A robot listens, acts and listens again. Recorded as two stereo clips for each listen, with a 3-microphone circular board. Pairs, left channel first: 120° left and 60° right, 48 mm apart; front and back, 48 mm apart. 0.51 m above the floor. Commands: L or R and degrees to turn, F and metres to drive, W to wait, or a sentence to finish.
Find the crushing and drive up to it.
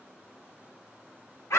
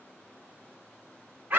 W
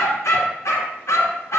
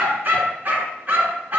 W
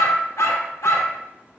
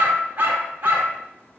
I can't make out crushing, only a dog barking.